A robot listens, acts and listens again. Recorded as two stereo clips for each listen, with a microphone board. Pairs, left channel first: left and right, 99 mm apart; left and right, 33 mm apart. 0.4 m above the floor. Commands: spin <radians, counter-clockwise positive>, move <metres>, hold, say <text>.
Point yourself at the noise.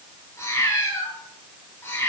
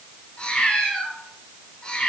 spin 0.35
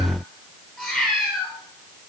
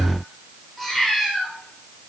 say Facing the cat meowing, over 4 m away.